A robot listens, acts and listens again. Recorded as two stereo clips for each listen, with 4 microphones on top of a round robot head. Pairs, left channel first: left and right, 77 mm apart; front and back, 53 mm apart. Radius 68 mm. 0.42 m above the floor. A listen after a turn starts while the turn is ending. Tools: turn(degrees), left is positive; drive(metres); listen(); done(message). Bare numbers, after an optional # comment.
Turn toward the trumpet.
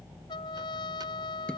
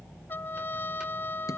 # The trumpet: 50° left.
turn(50)
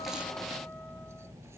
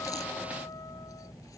listen()
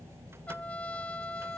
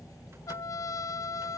# The trumpet is now 15° left.
turn(15)
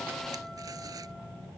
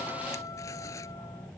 listen()
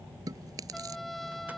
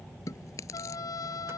done("Facing the trumpet.")